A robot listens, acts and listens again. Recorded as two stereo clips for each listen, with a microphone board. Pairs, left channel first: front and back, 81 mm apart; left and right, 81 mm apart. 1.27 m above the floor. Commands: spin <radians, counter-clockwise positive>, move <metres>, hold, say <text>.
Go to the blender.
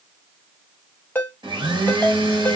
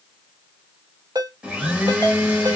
spin -2.88
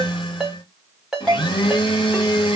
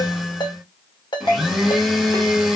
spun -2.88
move 1.0
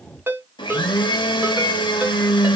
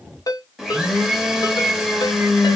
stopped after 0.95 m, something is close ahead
say Arrived at the blender, straight ahead.